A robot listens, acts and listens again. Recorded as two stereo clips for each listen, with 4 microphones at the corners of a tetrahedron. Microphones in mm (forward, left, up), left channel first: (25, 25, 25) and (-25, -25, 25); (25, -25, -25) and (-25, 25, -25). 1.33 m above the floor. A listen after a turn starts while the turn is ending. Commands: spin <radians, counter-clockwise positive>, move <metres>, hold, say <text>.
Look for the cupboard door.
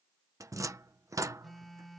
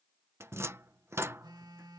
spin -3.05
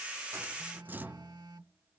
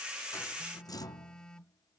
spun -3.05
spin -1.22
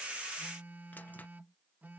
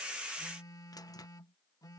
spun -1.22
hold
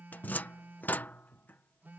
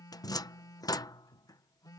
spin -0.35
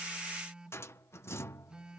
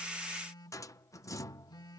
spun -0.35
say Facing the cupboard door.